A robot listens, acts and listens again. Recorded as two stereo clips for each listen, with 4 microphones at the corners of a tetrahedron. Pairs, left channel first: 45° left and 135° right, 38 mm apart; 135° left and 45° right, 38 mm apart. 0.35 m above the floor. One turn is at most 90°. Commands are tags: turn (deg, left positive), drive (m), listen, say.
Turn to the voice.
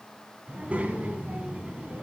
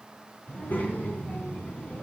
<turn deg="90"/>
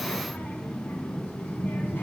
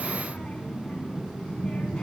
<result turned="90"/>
<turn deg="65"/>
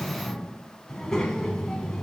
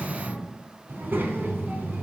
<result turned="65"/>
<turn deg="-30"/>
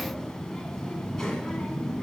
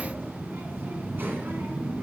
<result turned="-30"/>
<turn deg="-35"/>
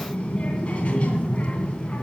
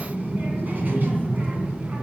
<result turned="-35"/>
<turn deg="-15"/>
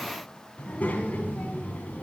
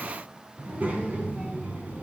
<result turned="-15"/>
<say>Found it: a child speaking, straight ahead.</say>